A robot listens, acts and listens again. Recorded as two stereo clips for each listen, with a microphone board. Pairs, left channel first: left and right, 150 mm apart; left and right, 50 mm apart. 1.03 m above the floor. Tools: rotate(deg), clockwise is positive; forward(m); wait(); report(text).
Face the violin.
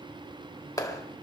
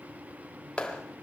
wait()
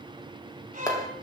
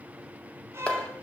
rotate(65)
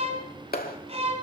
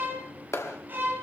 rotate(45)
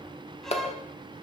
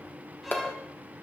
wait()
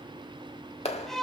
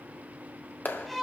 report("Facing the violin.")